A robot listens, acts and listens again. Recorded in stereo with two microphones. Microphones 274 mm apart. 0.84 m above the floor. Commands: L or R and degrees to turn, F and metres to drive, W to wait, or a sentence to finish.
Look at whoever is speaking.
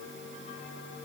W
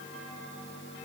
W
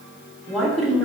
L30
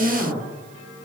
R30
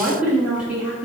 Found it: a woman speaking, straight ahead, 1 to 2 m away.